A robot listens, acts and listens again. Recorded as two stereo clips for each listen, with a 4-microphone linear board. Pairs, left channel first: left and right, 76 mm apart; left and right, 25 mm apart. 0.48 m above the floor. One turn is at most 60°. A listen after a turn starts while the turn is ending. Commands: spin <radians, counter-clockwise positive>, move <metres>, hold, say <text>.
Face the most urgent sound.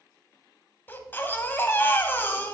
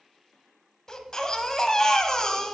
spin 0.44
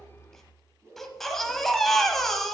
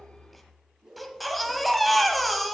say Found it: a baby crying, straight ahead, under 1 m away.